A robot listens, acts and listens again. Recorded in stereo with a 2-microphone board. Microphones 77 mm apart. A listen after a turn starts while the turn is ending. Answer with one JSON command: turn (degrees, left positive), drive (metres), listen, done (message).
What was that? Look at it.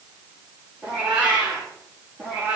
{"turn": -25}
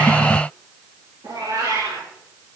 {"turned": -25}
{"turn": -120}
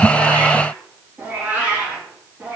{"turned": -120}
{"turn": -15}
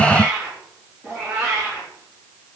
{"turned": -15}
{"done": "Found it: a cat meowing, straight ahead, over 4 m away."}